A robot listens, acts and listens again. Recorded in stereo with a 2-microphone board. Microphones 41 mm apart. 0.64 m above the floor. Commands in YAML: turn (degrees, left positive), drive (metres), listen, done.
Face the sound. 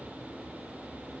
listen: true
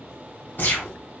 turn: 50
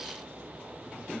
listen: true
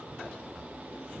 done: "I heard a gunshot, but can't make it out now. It was about straight ahead or 80° left."